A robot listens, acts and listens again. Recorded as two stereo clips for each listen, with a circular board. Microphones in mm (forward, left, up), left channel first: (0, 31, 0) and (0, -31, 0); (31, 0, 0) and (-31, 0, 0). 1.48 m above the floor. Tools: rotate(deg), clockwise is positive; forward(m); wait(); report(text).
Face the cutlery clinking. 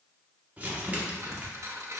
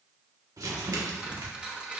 rotate(110)
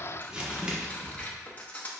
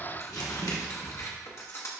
rotate(-30)
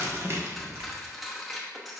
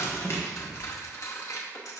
report("Facing the cutlery clinking.")